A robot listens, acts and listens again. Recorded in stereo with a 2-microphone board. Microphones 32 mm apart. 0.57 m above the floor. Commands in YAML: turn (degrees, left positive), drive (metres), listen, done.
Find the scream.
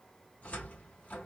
listen: true
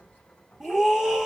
turn: -30
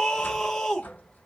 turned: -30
turn: 15
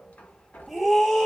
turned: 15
done: "Found it: a scream, straight ahead."